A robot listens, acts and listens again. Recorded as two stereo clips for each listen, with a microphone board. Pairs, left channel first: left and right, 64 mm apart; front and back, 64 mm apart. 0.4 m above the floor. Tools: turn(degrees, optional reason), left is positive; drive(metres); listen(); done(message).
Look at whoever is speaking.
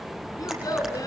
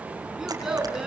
turn(degrees=100, reason="The child speaking: 100° left.")
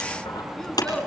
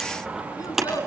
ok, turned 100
turn(degrees=10, reason="The child speaking is now 10° left.")
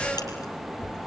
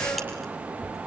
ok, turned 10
listen()
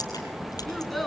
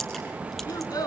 done("Found it: a child speaking, straight ahead, 2 to 4 m away.")